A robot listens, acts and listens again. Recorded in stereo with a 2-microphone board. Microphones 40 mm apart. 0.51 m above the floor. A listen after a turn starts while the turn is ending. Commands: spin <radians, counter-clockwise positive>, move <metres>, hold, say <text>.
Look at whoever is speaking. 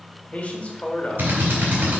spin 0.61
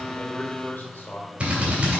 spin 1.83
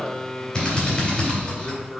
spin 0.79
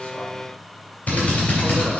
hold
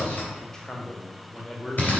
spin 0.35
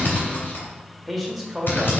say Found it: a man speaking, straight ahead, 1 to 2 m away.